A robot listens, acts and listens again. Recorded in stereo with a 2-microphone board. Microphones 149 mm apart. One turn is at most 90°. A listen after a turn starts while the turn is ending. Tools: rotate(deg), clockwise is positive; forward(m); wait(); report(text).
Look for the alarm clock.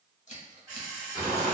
rotate(25)
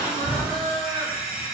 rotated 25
report("Facing the alarm clock.")